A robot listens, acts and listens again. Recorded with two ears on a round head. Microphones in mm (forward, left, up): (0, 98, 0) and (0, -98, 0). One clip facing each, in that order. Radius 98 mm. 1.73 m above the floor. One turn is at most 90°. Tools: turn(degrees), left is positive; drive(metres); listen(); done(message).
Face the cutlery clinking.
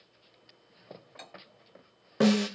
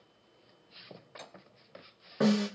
listen()
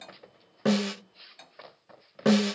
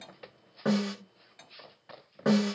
turn(degrees=30)
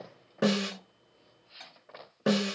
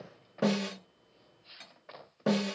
listen()
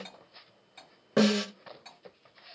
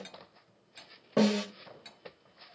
turn(degrees=-25)
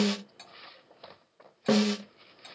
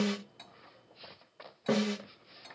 turn(degrees=25)
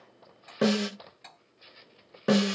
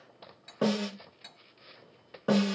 turn(degrees=-10)
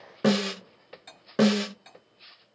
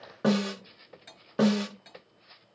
done("Facing the cutlery clinking, 1 to 2 m away.")